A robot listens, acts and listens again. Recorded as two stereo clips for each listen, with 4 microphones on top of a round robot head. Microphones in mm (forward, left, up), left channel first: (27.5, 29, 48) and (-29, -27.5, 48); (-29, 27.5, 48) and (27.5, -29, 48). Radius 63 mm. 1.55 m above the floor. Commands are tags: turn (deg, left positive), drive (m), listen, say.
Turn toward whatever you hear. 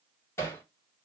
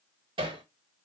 <turn deg="-15"/>
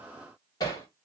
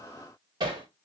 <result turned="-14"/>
<say>Facing the hammering, 2 to 4 m away.</say>